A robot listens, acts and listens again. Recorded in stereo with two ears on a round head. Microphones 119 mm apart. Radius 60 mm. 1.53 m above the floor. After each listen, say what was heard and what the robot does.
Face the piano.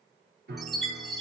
Turn 90° right.
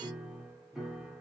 Found it: a piano, straight ahead, under 1 m away.